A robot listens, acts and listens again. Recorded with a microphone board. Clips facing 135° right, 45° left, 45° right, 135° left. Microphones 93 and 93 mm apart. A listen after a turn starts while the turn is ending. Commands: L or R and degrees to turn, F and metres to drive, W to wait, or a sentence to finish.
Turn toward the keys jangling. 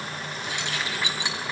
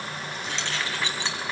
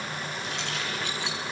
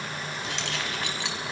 L150
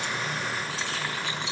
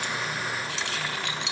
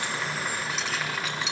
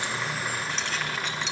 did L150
L45
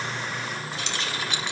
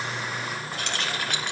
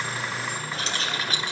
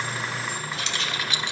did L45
L10
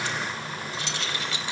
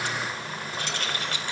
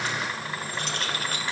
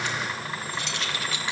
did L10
Found it: keys jangling, straight ahead.